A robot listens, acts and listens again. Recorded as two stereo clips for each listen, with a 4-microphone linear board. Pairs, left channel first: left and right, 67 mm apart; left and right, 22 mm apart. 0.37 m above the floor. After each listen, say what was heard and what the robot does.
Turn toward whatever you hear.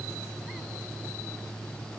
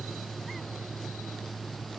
Keep listening.
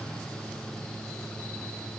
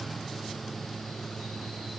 Keep listening.
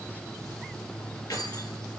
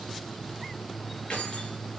Turn 90° left.
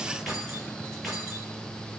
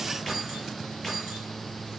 Facing the keys jangling.